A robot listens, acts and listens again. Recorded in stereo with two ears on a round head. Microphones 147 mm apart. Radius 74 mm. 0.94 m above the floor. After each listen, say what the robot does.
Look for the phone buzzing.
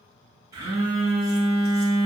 Turn 20° right.
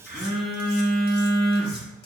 Found it: a phone buzzing, straight ahead, 1 to 2 m away.